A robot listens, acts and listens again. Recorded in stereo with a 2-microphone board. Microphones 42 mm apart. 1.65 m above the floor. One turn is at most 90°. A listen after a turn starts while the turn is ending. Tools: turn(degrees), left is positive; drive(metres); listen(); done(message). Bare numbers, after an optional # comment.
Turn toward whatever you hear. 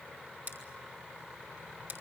# The scissors: about 55° right or 125° right.
turn(-55)
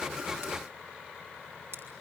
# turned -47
# So it is at 75° right.
turn(-75)
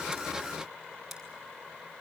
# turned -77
listen()
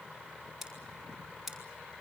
done("Found it: scissors, straight ahead.")